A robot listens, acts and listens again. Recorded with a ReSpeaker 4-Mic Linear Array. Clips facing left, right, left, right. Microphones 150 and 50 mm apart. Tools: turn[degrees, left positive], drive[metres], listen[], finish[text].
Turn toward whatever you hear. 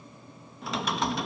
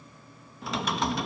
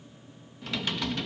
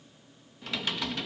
Action: turn[30]
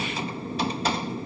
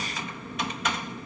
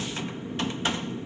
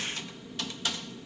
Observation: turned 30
Thought: So it is at 150° left.
Action: turn[150]
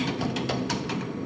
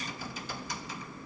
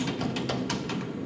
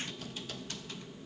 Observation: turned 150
Thought: The typing on a keyboard is now 70° left.
Action: turn[70]
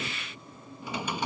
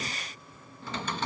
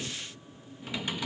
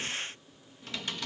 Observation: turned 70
Thought: The typing on a keyboard is now 10° left.
Action: turn[10]
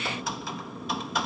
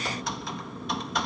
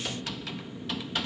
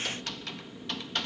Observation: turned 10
Action: finish[Found it: typing on a keyboard, straight ahead.]